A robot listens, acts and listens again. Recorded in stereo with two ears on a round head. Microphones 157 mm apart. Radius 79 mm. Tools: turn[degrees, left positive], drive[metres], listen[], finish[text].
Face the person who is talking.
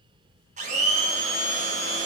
Action: listen[]
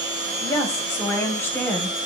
Action: turn[30]
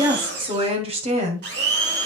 Thought: So it is at 40° right.
Action: turn[-40]
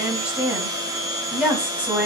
Action: finish[Facing the woman speaking, 2 to 4 m away.]